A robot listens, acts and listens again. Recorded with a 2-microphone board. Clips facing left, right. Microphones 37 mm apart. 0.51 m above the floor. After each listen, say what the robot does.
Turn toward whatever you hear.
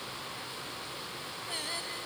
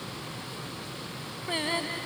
Turn 35° right.
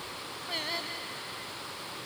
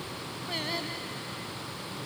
Found it: singing, straight ahead.